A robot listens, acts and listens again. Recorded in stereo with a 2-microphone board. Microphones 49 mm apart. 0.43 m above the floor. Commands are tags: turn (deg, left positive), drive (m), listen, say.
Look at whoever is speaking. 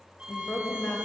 <turn deg="45"/>
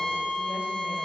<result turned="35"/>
<listen/>
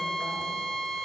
<listen/>
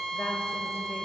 <say>I heard a woman speaking, but can't make it out now. It was about 10° left or 100° left.</say>